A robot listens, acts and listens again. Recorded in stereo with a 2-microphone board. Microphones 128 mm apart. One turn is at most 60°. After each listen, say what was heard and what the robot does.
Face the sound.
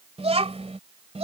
The child speaking: about 60° right or 120° right. Turn 60° right.
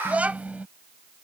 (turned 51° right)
So it is at 10° right. Turn 10° right.
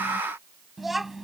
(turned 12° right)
Facing the child speaking.